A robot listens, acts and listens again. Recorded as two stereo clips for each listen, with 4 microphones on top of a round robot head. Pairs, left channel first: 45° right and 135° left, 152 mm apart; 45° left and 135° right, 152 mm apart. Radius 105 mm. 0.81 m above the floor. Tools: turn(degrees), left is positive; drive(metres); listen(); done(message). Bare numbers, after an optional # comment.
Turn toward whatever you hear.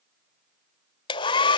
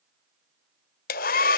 # The hair dryer: 15° left.
turn(15)
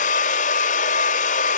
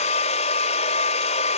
done("Found it: a hair dryer, straight ahead.")